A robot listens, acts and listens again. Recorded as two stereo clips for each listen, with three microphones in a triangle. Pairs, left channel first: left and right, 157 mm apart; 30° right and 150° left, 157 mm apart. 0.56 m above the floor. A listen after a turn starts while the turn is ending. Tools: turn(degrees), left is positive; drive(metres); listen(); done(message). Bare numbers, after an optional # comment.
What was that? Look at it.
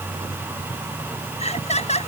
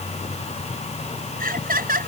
# The laughter: 135° left.
turn(135)
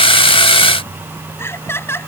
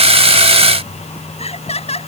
# The laughter is now 15° left.
turn(15)
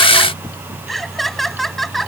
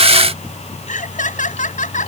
done("Facing the laughter.")